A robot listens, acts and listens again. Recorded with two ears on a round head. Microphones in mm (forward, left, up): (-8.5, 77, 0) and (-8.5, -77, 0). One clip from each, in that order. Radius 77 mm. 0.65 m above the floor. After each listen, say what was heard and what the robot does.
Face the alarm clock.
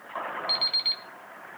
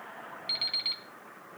Turn 30° left.
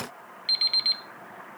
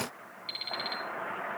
So it is at 145° left. Turn 145° left.
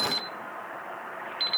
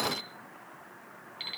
The alarm clock is now 20° left. Turn 20° left.
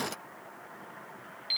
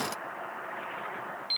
Facing the alarm clock, 2 to 4 m away.